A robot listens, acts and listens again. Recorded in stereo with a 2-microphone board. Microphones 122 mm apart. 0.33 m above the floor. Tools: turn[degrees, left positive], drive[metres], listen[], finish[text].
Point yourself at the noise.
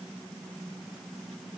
Action: listen[]
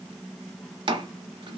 Thought: The chopping: about 45° right or 135° right.
Action: turn[-45]
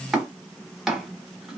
Action: finish[Found it: chopping, straight ahead.]